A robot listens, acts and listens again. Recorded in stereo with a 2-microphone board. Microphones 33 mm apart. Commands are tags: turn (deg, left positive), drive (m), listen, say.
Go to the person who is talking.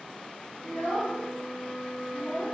<turn deg="70"/>
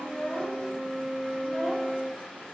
<turn deg="40"/>
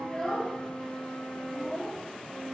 <drive m="1.0"/>
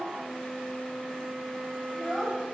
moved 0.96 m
<drive m="1.0"/>
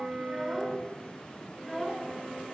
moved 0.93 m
<drive m="1.0"/>
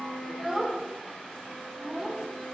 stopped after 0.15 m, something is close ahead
<say>Arrived at the child speaking, straight ahead.</say>